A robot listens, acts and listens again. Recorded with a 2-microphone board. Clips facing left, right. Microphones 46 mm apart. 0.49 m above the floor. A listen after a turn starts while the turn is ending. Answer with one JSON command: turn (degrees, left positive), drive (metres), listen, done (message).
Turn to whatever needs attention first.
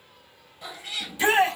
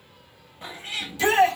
{"turn": 20}
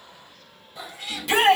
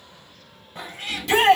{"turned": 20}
{"done": "Found it: a shout, straight ahead."}